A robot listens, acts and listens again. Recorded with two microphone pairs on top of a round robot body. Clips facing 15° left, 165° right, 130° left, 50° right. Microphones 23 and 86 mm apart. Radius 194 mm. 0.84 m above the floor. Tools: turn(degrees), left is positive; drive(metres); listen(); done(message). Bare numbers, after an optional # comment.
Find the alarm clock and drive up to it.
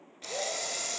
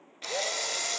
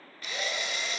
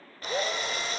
listen()
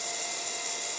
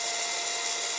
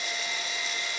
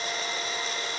listen()
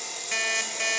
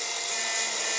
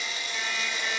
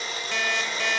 # The alarm clock: 35° right.
turn(-35)
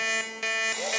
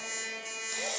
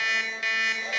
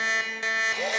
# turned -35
# The alarm clock is now 15° left.
turn(15)
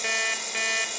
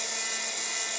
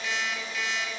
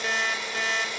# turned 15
drive(1.0)
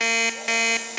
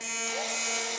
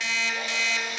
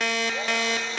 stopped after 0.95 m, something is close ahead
done("I am next to the alarm clock.")